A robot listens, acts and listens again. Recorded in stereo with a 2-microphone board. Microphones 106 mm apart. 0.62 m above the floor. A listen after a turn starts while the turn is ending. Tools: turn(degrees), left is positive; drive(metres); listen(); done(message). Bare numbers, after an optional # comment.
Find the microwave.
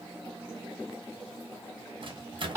# The microwave: about 50° right or 130° right.
turn(-50)
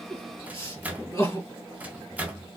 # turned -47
# So it is at 15° right.
turn(-15)
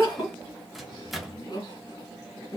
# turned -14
done("Facing the microwave.")